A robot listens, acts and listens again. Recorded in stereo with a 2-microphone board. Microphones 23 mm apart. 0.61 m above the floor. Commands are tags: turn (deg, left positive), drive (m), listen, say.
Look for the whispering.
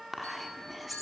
<turn deg="-30"/>
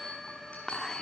<turn deg="30"/>
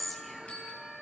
<say>Facing the whispering, 1 to 2 m away.</say>